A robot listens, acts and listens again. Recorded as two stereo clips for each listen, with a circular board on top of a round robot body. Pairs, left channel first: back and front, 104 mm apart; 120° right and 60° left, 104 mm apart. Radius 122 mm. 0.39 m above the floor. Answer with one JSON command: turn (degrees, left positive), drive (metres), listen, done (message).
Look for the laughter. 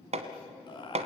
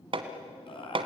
{"turn": -145}
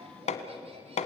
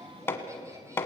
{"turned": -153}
{"listen": true}
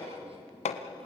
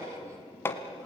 {"listen": true}
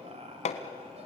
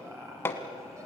{"done": "Found it: laughter, straight ahead, 2 to 4 m away."}